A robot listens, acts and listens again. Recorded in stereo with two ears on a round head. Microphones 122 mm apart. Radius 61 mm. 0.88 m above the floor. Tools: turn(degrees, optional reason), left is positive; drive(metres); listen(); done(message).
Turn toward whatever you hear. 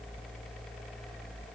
listen()
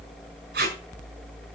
turn(degrees=-90)
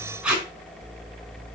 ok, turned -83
turn(degrees=-10, reason="So it is at 10° right.")
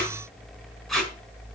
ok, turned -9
done("Found it: tape being pulled, straight ahead.")